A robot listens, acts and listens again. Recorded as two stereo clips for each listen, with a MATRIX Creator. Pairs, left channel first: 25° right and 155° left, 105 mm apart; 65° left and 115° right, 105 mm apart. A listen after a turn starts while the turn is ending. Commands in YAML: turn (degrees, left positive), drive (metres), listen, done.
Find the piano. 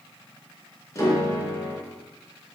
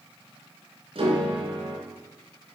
turn: -85
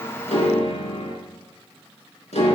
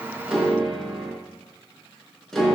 turn: -20
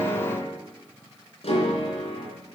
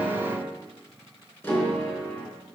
done: "Found it: a piano, straight ahead, 2 to 4 m away."